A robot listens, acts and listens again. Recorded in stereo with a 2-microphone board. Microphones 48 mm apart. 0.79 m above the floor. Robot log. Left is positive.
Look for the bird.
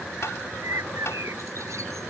note: The bird: about 75° right or 105° right.
cmd yaw -75
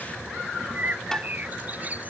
note: So it is at 35° right.
cmd yaw -35
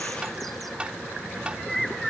end: Facing the bird.